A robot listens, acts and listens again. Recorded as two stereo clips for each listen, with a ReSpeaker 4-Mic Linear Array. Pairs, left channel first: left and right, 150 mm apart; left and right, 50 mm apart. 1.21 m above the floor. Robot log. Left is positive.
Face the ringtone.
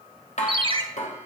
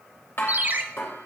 note: The ringtone: about 40° right or 140° right.
cmd yaw -40
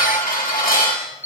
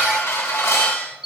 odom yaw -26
note: So it is at 15° right.
cmd yaw -15
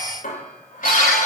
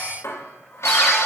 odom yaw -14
cmd idle
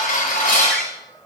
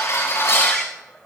cmd idle
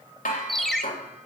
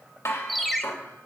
end: Found it: a ringtone, straight ahead, under 1 m away.